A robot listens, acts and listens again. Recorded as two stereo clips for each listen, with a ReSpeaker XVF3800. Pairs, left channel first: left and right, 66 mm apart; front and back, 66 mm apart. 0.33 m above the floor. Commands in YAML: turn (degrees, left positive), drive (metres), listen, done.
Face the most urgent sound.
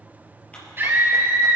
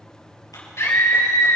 turn: -40
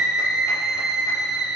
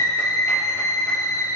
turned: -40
turn: -10
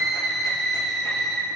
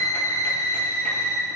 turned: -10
done: "Found it: a scream, straight ahead, 2 to 4 m away."